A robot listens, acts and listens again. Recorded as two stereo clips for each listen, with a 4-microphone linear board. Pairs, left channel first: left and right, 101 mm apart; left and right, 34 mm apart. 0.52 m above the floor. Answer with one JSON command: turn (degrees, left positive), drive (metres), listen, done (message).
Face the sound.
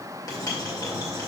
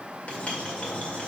{"turn": 40}
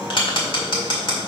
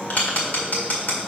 {"turn": 90}
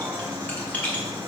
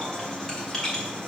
{"turn": 20}
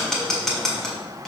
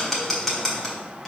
{"done": "Found it: writing, straight ahead, 1 to 2 m away."}